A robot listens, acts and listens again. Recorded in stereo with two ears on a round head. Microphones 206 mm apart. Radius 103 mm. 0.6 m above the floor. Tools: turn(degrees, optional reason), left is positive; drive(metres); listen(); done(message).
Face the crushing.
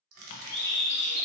turn(degrees=-70, reason="The crushing: about 70° right or 110° right.")
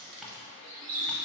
turn(degrees=-25, reason="So it is at 25° right.")
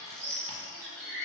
listen()
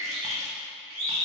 listen()
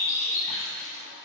done("Facing where the crushing came from. I can't hear it now.")